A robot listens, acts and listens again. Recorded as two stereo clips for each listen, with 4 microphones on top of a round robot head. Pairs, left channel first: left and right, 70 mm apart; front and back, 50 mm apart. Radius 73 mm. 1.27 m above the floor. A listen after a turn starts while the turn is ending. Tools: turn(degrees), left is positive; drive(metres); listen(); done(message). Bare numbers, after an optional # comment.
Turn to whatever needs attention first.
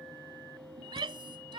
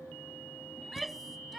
# The shout: 90° right.
turn(-90)
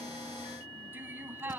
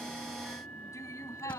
# The shout is now 25° right.
turn(-25)
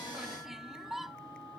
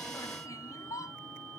done("Found it: a shout, straight ahead.")